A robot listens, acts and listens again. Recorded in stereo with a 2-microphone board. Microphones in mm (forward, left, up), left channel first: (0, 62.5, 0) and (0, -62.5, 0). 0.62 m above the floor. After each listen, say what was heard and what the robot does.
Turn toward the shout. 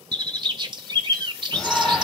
Turn 30° left.
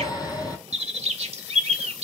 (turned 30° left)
So it is at 150° left. Turn 150° left.
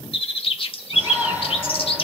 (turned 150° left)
The shout is now 10° right. Turn 10° right.
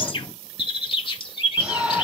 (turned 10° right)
Facing the shout.